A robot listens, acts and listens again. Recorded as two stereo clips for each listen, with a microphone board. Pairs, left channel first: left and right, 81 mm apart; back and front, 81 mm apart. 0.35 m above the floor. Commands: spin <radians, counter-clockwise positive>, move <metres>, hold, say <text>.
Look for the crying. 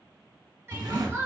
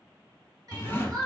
spin -0.61
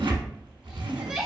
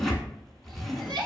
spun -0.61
say Found it: crying, straight ahead.